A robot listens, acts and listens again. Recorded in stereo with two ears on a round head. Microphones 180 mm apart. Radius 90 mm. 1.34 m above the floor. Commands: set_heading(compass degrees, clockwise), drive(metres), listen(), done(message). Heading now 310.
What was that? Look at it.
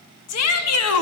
set_heading(220)
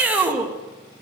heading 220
done("Found it: a shout, straight ahead.")